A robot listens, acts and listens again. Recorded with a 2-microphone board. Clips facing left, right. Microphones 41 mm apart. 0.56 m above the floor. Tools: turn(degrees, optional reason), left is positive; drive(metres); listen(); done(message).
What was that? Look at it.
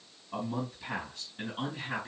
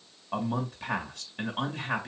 turn(degrees=-60, reason="The man speaking: about 60° right or 120° right.")
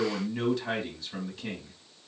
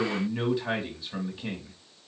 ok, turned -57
turn(degrees=-10, reason="So it is at 10° right.")
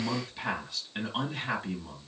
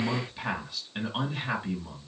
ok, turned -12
done("Facing the man speaking, 1 to 2 m away.")